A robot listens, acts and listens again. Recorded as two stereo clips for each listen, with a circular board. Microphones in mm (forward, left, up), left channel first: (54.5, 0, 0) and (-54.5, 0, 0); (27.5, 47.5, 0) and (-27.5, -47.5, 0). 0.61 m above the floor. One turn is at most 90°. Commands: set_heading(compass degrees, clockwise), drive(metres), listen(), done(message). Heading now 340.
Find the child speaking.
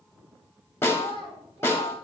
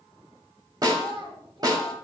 set_heading(70)
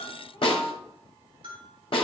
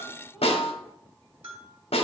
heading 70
set_heading(140)
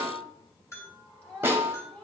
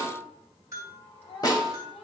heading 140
set_heading(65)
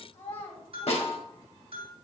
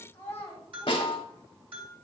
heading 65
set_heading(80)
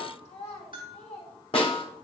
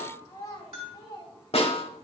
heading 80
done("Found it: a child speaking, straight ahead.")